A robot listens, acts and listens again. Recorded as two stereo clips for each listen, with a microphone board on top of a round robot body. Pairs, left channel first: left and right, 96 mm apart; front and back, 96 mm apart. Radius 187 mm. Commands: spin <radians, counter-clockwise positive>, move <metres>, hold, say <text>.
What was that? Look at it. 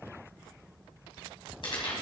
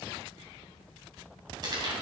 spin 2.36
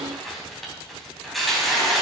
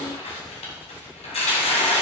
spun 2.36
say Found it: tearing paper, straight ahead.